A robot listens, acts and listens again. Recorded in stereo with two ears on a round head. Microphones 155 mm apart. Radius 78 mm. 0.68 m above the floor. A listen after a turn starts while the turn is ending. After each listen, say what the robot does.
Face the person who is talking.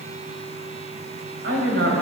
Turn 75° right.
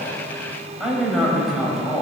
Facing the man speaking.